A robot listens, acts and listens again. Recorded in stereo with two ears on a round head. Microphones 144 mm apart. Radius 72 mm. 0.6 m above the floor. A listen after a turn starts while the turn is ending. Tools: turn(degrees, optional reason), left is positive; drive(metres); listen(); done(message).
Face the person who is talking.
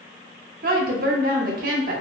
turn(degrees=-55, reason="The woman speaking: about 55° right or 125° right.")
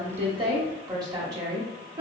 turn(degrees=-30, reason="So it is at 30° right.")
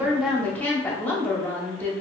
turn(degrees=10, reason="The woman speaking is now 10° left.")
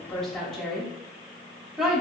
done("Facing the woman speaking, under 1 m away.")